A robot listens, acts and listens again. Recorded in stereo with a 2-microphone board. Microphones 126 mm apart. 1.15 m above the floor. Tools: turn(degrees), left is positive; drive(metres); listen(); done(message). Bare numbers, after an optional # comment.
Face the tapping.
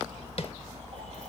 # The tapping: about 50° left or 130° left.
turn(50)
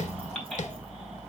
# So it is at 75° left.
turn(75)
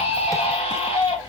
listen()
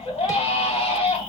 listen()
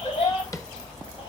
# The tapping is now 25° left.
turn(25)
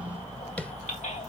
# The tapping is now 10° left.
turn(10)
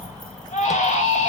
listen()
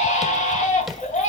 listen()
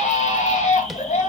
done("Facing where the tapping came from. I can't hear it now.")